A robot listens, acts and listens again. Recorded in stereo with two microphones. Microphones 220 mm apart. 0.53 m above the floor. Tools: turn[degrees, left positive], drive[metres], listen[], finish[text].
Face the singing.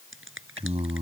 Thought: The singing: about 25° right or 155° right.
Action: turn[-25]
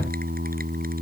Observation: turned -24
Thought: So it is at 135° right.
Action: turn[-135]
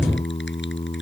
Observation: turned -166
Thought: The singing is now 25° left.
Action: turn[25]
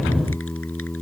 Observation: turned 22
Action: finish[Found it: singing, straight ahead.]